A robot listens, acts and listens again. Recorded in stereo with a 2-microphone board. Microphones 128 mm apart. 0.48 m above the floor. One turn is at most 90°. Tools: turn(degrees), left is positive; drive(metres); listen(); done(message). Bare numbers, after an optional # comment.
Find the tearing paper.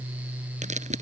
# The tearing paper: about 70° right or 110° right.
turn(-70)
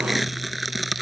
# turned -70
done("Facing the tearing paper.")